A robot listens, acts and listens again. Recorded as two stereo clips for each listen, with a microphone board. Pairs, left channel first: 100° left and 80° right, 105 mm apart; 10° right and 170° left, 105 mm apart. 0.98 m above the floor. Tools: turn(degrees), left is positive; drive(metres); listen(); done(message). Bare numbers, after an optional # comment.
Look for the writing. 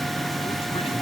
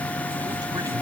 listen()
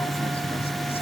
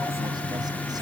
listen()
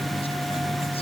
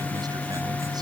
done("I can't make out writing.")